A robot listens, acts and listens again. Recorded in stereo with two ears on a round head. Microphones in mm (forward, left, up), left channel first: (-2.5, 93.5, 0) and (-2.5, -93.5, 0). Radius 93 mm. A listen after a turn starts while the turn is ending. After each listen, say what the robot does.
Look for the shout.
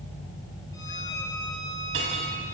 Keep listening.
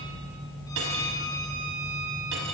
Keep listening.
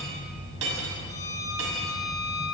I can't make out a shout, only a violin and cutlery clinking.